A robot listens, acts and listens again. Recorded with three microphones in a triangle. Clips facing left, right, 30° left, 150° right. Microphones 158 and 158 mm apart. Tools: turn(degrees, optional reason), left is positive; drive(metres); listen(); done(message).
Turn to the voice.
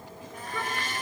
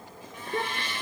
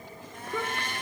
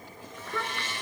turn(degrees=-40, reason="The child speaking: 40° right.")
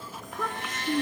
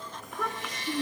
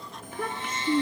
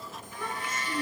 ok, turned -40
done("Found it: a child speaking, straight ahead.")